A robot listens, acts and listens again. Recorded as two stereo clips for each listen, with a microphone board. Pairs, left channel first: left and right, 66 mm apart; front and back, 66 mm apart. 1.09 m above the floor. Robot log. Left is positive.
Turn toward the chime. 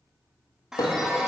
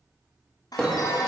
note: The chime: 10° right.
cmd yaw -10
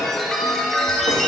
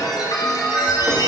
end: Found it: a chime, straight ahead, under 1 m away.